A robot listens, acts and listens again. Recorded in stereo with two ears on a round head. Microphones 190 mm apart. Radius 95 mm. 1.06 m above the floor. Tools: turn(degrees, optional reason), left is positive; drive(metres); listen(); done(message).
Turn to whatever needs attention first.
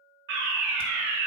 turn(degrees=-55, reason="The fire alarm: about 55° right or 125° right.")
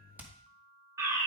turn(degrees=-15, reason="So it is at 15° right.")
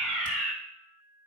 done("Facing the fire alarm.")